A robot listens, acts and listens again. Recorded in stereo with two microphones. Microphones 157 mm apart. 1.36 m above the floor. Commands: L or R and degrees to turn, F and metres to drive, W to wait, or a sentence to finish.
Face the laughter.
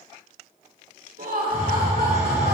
R65
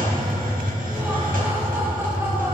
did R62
W
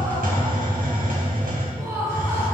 R20
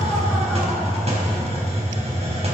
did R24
W
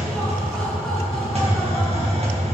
W
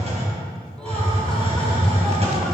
I heard laughter from this way, but can't make it out now.